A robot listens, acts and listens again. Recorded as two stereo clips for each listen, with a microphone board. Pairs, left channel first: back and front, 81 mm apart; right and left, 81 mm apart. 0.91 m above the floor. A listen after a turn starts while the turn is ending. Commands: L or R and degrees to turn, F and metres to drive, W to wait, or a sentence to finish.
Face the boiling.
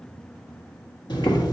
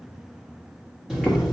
L175
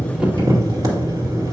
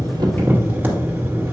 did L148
L25
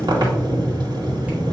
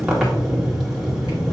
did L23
Found it: boiling, straight ahead.